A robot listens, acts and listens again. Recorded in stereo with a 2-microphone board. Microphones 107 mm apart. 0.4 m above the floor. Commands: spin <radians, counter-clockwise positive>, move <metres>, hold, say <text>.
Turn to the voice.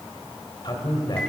spin 0.70
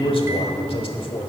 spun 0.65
spin 1.57
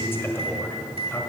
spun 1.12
spin 0.44
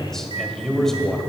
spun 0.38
say Facing the man speaking, 1 to 2 m away.